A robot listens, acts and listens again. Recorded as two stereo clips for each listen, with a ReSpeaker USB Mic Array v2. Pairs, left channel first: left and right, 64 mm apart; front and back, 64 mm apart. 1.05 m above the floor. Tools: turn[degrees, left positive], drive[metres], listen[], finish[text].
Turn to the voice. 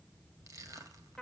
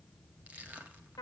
Action: listen[]
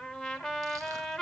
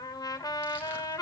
Action: listen[]
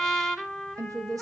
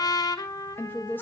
Thought: The woman speaking: 60° right.
Action: turn[-60]
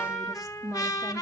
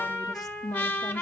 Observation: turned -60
Action: finish[Found it: a woman speaking, straight ahead.]